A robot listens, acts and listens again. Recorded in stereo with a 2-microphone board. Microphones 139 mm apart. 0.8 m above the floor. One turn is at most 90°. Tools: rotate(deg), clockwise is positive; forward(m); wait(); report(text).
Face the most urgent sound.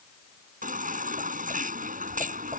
rotate(90)
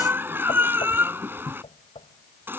rotate(15)
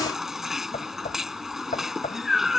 report("Found it: a baby crying, straight ahead.")